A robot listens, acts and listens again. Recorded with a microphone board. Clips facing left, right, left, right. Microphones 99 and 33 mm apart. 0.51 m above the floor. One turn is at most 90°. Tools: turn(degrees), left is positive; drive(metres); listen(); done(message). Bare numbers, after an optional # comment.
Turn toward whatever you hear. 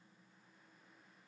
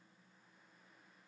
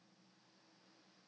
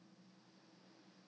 listen()
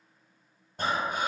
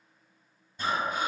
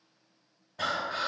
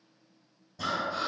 # The breathing: about 65° left or 115° left.
turn(65)
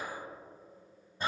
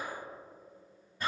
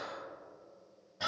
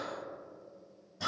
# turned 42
# So it is at 30° left.
turn(30)
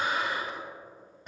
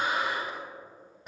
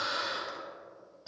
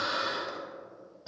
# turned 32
done("Facing the breathing.")